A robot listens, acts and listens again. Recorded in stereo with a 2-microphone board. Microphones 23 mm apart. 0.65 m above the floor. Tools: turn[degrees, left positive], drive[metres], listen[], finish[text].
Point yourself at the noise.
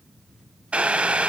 Thought: The boiling: about 60° right or 120° right.
Action: turn[-60]
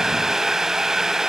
Thought: So it is at 20° right.
Action: turn[-20]
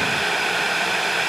Action: finish[Facing the boiling.]